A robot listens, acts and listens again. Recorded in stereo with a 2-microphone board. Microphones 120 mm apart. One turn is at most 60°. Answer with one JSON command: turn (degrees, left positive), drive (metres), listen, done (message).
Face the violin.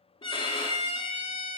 {"turn": 45}
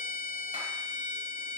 {"turn": 60}
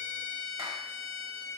{"turn": 30}
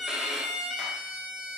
{"done": "Facing the violin."}